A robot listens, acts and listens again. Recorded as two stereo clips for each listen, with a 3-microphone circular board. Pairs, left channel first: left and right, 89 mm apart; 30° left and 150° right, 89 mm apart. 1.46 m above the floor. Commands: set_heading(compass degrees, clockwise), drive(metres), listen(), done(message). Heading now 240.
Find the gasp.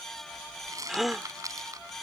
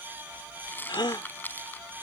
done("Facing the gasp.")